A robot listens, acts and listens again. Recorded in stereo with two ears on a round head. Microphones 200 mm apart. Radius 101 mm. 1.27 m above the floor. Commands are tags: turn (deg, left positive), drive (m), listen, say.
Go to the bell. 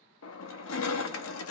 <listen/>
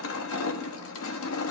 <listen/>
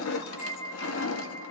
<turn deg="50"/>
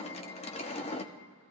<listen/>
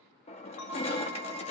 <turn deg="75"/>
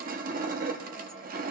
<listen/>
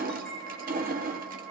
<drive m="1.0"/>
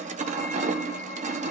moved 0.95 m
<listen/>
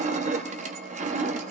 <listen/>
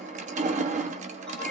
<say>Facing where the bell came from. I can't hear it now. I did not reach it.</say>